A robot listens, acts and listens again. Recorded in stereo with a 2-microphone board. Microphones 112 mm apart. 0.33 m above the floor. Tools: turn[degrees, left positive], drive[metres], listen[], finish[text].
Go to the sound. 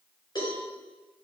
Thought: The cowbell: about 40° left or 140° left.
Action: turn[40]
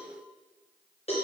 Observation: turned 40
Thought: So it is at 100° left.
Action: turn[100]
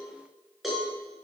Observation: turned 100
Action: drive[1.0]
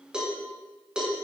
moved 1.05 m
Thought: The cowbell is now 10° right.
Action: turn[-10]
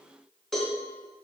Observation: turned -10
Action: drive[1.0]
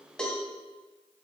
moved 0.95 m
Action: drive[1.0]
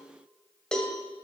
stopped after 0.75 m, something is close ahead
Thought: The cowbell is now 10° left.
Action: turn[10]
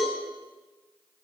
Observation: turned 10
Action: finish[Arrived at the cowbell, straight ahead.]